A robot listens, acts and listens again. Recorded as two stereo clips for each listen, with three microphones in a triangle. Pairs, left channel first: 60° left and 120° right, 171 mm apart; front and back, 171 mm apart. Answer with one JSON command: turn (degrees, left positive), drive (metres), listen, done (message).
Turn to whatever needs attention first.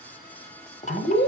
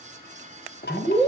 {"turn": 70}
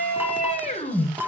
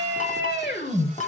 {"turn": 15}
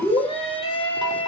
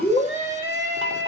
{"done": "Facing the scream, over 4 m away."}